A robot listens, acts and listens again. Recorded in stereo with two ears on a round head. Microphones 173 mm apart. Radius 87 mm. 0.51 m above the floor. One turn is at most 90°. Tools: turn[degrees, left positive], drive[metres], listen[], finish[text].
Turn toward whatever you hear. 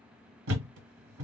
Action: turn[-90]
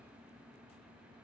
Action: finish[Facing where the thud came from. I can't hear it now.]